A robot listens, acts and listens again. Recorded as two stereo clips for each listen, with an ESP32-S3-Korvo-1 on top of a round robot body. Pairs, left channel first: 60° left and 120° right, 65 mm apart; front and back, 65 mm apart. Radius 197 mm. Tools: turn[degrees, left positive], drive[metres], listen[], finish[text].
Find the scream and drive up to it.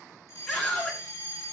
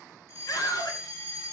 Thought: The scream: 25° right.
Action: turn[-25]
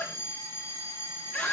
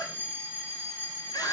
Thought: The scream is now 10° right.
Action: turn[-10]
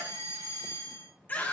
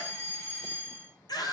Action: drive[1.0]
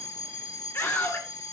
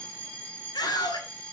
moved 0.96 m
Action: drive[1.0]
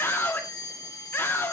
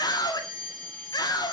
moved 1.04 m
Action: drive[1.0]
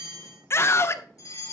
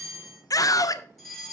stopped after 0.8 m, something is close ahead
Thought: The scream is now 20° left.
Action: turn[20]
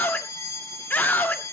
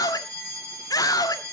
Action: finish[I am next to the scream.]